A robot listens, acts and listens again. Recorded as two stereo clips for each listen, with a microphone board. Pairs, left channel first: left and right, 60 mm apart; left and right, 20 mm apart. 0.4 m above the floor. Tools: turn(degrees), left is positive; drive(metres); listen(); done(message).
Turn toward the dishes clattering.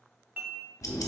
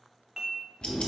turn(degrees=-30)
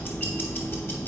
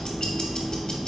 listen()
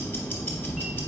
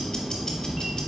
listen()
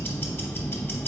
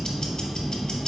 done("I heard dishes clattering, but can't make it out now. It was about straight ahead or 120° right.")